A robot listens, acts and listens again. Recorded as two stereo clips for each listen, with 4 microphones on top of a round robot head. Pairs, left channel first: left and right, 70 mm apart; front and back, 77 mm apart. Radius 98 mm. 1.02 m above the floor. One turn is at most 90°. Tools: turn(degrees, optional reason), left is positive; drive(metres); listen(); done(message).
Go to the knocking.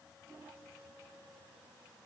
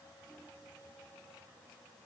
listen()
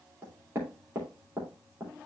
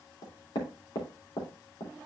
turn(degrees=-25, reason="The knocking: 25° right.")
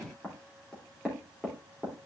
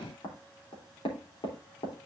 drive(metres=1.0)
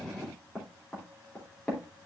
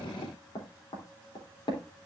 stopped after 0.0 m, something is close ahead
turn(degrees=10, reason="The knocking is now 10° left.")
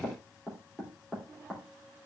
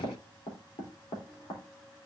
done("Blocked. The knocking is further on, straight ahead.")